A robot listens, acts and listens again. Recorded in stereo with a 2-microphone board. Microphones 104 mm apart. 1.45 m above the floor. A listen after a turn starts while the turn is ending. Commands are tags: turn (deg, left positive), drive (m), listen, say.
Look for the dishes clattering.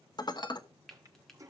<turn deg="40"/>
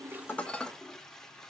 <turn deg="10"/>
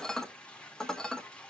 <say>Found it: dishes clattering, straight ahead.</say>